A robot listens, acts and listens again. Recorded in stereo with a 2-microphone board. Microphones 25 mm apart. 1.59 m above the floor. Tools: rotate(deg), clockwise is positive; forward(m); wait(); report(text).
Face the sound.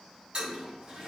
rotate(35)
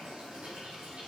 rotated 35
rotate(105)
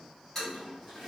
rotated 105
report("Facing the toilet flushing.")